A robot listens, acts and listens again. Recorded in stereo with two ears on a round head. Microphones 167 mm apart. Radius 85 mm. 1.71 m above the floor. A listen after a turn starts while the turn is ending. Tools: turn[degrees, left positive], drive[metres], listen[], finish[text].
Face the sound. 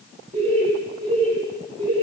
Thought: The laughter: about 30° right or 150° right.
Action: turn[-30]
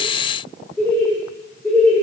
Action: finish[Found it: laughter, straight ahead, over 4 m away.]